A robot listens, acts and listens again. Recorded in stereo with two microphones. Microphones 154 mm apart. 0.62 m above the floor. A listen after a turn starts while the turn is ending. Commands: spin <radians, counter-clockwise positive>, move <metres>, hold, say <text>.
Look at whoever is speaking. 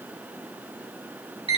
hold
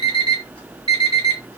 hold
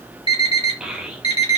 spin -0.52
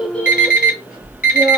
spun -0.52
hold
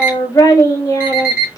spin 0.44
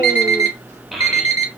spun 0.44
say Facing the child speaking.